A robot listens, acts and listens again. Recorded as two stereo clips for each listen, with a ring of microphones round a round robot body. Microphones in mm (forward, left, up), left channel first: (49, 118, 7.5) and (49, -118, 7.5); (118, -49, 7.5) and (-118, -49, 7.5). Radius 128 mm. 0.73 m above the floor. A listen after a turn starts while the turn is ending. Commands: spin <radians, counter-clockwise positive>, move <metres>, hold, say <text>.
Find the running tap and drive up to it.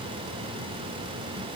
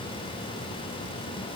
hold
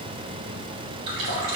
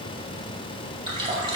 spin -1.92
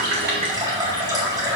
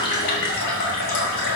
spin -0.26
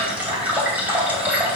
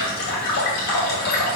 move 1.0
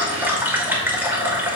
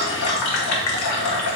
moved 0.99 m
spin -0.17
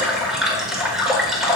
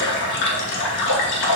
move 1.0
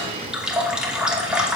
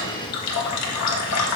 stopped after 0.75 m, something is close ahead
say I am next to the running tap.